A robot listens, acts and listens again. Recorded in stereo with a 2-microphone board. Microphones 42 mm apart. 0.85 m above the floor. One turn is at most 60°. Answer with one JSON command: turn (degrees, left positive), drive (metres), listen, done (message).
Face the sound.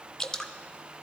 {"turn": 15}
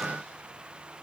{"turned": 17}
{"listen": true}
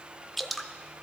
{"done": "Facing the dripping."}